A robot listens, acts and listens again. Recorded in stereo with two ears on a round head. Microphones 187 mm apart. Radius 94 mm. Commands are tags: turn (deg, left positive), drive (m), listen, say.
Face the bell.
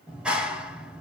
<listen/>
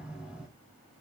<listen/>
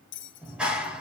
<turn deg="65"/>
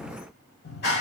<listen/>
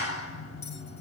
<listen/>
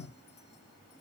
<say>I heard a bell, but can't make it out now. It was about straight ahead or 50° left.</say>